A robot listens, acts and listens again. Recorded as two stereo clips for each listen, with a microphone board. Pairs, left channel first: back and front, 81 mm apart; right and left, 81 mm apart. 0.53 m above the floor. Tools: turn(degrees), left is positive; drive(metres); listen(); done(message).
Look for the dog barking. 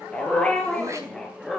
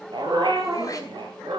turn(degrees=95)
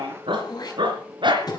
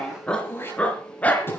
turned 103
turn(degrees=-20)
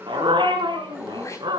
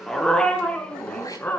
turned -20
turn(degrees=-20)
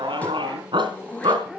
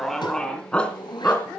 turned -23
turn(degrees=-20)
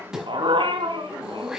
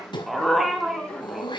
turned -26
done("Found it: a dog barking, straight ahead, 2 to 4 m away.")